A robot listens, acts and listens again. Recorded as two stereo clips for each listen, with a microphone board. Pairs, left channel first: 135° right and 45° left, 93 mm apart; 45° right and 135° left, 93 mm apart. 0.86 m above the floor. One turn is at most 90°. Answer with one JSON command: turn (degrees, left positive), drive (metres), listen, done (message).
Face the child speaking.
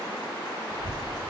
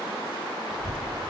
{"turn": 90}
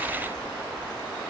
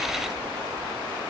{"turn": 90}
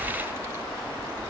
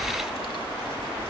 {"turn": -15}
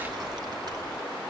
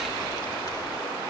{"done": "Found it: a child speaking, straight ahead."}